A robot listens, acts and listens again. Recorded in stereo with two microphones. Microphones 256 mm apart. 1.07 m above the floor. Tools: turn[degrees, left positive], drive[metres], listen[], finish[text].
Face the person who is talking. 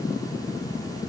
Action: listen[]
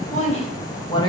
Thought: The woman speaking: about 15° left or 165° left.
Action: turn[15]
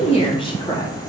Action: turn[30]
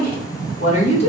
Thought: The woman speaking: about 25° left or 155° left.
Action: turn[25]
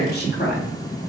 Thought: So it is at 140° left.
Action: turn[140]
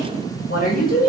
Thought: The woman speaking is now 35° left.
Action: turn[35]
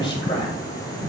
Thought: The woman speaking is now 20° left.
Action: turn[20]
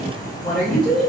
Action: finish[Found it: a woman speaking, straight ahead, 2 to 4 m away.]